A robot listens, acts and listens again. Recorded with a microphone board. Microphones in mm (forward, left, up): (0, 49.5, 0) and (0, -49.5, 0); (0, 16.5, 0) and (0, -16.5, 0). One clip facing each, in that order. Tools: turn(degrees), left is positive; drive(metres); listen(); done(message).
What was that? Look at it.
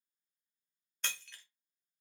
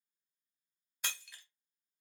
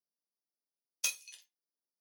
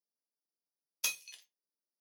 turn(degrees=-30)
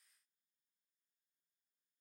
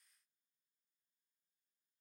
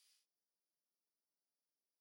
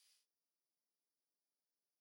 listen()
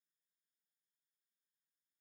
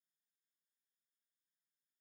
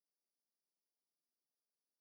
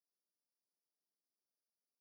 done("I heard breaking glass, but can't make it out now. It was about 20° left or 140° right.")